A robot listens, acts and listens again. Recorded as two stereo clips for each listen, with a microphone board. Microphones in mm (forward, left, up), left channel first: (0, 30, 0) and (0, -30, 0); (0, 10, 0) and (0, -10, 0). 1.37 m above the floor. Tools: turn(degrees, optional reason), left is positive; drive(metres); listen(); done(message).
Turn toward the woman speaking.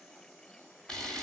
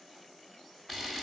listen()
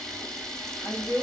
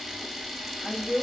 turn(degrees=75, reason="The woman speaking: about 75° left or 105° left.")
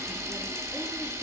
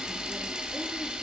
listen()
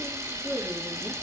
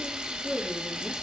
listen()
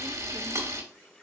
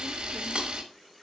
done("I heard a woman speaking, but can't make it out now. It was about straight ahead or 30° left.")